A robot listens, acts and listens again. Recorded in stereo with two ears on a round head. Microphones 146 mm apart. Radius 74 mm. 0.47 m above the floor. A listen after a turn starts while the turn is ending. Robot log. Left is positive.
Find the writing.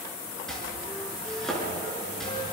cmd idle
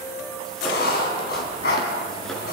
note: The writing: about 70° left or 110° left.
cmd yaw +70
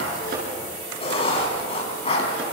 note: So it is at 35° left.
cmd yaw +35
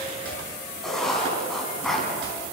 end: Found it: writing, straight ahead, over 4 m away.